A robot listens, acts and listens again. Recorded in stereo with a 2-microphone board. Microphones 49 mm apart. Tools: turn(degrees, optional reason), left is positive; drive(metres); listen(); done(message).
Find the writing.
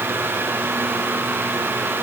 listen()
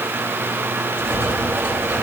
turn(degrees=-90)
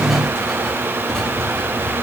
turn(degrees=10, reason="So it is at 10° left.")
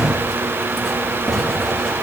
done("Found it: writing, straight ahead.")